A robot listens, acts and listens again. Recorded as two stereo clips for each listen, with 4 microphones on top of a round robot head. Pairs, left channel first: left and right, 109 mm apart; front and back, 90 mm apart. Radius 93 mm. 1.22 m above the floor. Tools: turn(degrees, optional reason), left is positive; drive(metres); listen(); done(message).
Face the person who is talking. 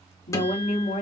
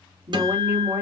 turn(degrees=110, reason="The woman speaking: 110° left.")
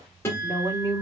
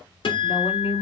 turn(degrees=-25, reason="The woman speaking is now 25° right.")
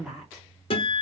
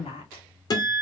done("Facing the woman speaking, 2 to 4 m away.")